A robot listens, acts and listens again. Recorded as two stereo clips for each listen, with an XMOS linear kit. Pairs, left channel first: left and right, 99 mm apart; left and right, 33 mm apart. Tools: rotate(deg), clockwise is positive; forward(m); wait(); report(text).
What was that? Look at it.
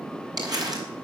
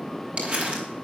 rotate(40)
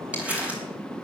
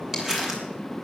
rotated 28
rotate(15)
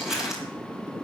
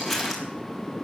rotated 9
report("Facing the crumpling.")